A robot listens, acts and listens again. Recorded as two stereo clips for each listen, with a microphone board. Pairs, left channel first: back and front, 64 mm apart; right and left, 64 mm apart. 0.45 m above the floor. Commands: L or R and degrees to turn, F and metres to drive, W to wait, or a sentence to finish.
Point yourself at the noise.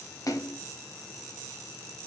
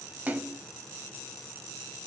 L155
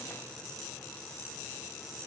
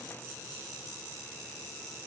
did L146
L10
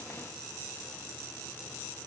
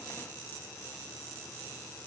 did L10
I heard a splash from this way, but can't make it out now.